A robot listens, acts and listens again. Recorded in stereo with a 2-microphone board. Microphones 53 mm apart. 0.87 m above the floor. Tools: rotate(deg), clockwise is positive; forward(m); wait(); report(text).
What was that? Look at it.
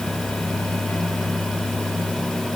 wait()
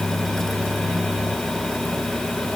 wait()
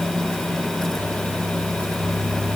report("I can't make out anything.")